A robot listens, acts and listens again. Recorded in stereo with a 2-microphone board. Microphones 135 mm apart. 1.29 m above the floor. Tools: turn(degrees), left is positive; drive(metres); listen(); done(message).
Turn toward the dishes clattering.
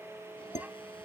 turn(degrees=60)
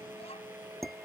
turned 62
done("Found it: dishes clattering, straight ahead.")